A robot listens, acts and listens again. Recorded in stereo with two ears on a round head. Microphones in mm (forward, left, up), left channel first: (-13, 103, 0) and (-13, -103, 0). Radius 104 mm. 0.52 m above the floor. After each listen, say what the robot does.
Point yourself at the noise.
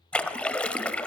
Turn 30° left.
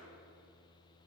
Keep listening.
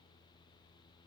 I heard a splash, but can't make it out now. It was about 25° right or 145° left.